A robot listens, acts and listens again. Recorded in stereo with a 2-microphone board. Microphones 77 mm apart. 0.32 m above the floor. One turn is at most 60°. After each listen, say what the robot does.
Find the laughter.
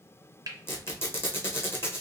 Keep listening.
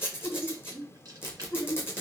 Turn 60° left.
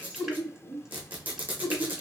Turn 25° left.
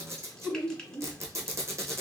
Found it: laughter, straight ahead.